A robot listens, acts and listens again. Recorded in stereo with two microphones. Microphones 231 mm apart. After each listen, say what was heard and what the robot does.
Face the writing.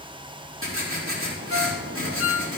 The writing: about 65° right or 115° right. Turn 65° right.
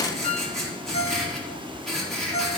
Found it: writing, straight ahead.